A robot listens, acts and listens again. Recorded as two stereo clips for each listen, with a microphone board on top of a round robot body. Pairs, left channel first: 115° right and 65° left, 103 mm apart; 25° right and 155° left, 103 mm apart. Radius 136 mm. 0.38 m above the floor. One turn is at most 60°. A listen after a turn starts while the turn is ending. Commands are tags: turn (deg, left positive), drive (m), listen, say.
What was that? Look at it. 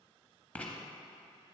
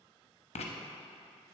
<turn deg="-35"/>
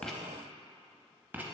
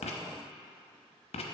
<turn deg="-10"/>
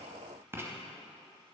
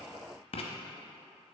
<say>Found it: writing, straight ahead.</say>